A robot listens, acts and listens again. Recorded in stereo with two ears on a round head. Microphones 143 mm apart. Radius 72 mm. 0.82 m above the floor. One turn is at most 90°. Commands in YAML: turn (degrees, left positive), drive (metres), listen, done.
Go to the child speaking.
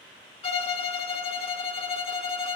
listen: true
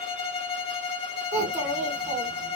turn: -40
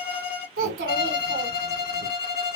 turn: -90
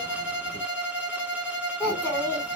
turn: 10
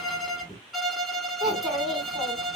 drive: 1.0
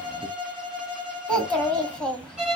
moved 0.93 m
drive: 1.0
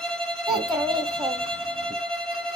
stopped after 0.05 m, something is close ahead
done: "I am next to the child speaking."